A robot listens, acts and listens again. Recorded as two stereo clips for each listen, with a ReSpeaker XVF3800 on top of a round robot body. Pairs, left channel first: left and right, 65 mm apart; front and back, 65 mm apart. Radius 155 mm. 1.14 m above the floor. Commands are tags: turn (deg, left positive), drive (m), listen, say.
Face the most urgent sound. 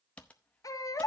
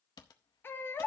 <turn deg="55"/>
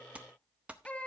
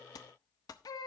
<turn deg="15"/>
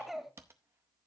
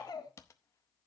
<say>Facing the baby crying.</say>